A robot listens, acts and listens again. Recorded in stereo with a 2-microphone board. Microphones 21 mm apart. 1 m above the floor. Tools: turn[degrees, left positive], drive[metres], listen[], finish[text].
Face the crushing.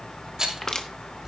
Thought: The crushing: about 30° left or 150° left.
Action: turn[30]
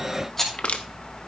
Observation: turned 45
Thought: So it is at 105° left.
Action: turn[105]
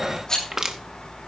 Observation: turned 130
Thought: The crushing is now 25° right.
Action: turn[-25]
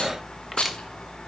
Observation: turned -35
Thought: Nothing new. It was at 10° left.
Action: turn[10]
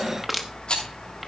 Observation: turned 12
Action: finish[Found it: crushing, straight ahead, 1 to 2 m away.]